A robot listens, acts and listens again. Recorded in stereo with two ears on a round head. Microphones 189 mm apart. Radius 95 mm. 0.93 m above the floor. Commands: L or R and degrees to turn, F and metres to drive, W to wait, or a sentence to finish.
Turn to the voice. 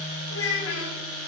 L90
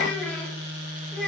Facing the child speaking.